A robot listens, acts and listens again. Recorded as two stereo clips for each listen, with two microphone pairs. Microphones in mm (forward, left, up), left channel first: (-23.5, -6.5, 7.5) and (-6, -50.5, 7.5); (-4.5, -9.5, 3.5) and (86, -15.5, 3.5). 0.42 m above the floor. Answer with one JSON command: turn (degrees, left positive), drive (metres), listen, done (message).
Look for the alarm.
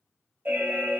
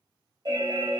{"turn": -30}
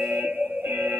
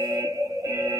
{"turn": -45}
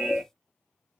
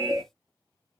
{"turn": -15}
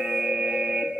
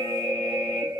{"turn": -10}
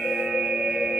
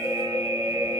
{"done": "Found it: an alarm, straight ahead."}